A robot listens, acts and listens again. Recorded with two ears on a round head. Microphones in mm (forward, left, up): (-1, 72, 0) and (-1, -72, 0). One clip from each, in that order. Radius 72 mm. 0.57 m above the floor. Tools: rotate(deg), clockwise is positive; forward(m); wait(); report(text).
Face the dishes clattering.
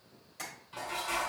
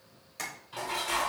rotate(20)
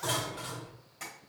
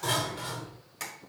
report("Facing the dishes clattering, 1 to 2 m away.")